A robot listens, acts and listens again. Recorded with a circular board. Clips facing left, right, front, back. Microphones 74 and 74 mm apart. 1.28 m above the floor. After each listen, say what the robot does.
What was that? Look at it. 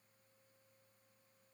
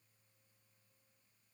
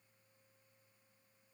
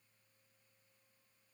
Keep listening.
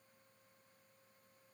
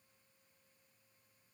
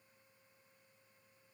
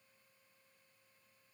Keep listening.
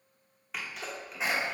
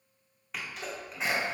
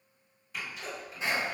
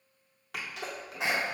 Turn 180° left.
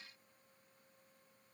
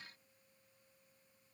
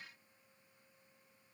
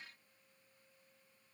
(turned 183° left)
Facing where the sneeze came from. I can't hear it now.